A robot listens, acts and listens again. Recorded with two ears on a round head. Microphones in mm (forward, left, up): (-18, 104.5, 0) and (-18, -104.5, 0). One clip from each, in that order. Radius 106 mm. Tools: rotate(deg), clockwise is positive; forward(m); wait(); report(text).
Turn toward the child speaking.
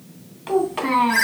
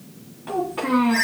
rotate(-90)
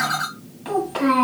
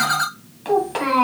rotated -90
rotate(20)
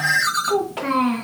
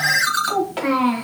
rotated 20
rotate(15)
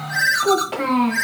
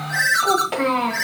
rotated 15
rotate(20)
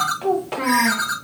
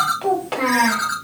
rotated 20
rotate(15)
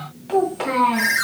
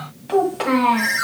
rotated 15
report("Facing the child speaking.")